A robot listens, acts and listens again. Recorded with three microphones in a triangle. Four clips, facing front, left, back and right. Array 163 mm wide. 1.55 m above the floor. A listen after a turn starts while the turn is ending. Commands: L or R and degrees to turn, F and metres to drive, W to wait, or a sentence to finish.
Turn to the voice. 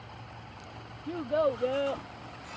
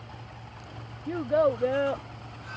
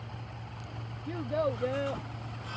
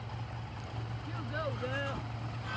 L75
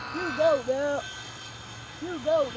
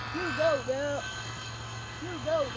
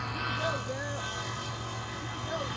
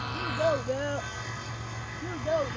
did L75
Found it: a child speaking, straight ahead.